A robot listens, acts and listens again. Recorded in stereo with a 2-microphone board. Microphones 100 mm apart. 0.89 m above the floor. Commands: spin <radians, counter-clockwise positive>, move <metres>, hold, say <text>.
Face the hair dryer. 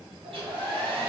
spin -1.05
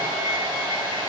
spin -0.87
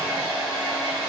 say Facing the hair dryer.